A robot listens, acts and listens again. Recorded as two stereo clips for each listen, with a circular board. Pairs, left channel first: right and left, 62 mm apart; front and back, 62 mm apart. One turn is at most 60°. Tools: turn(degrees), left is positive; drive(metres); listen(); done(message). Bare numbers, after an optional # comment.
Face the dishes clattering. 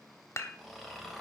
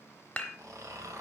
# The dishes clattering: 65° right.
turn(-60)
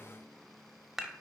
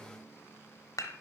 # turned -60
done("Found it: dishes clattering, straight ahead, 1 to 2 m away.")